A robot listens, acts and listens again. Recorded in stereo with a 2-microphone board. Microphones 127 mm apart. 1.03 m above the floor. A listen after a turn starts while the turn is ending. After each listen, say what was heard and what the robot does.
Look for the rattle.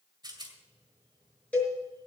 The rattle: about 35° right or 145° right. Turn 35° right.
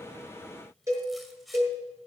Facing the rattle, 2 to 4 m away.